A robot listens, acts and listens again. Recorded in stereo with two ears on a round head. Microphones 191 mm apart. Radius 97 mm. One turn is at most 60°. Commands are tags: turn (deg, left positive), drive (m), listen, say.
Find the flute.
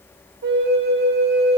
<turn deg="-55"/>
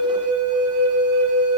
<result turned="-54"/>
<turn deg="-60"/>
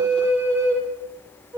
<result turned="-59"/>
<turn deg="-10"/>
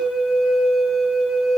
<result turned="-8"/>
<say>Found it: a flute, straight ahead.</say>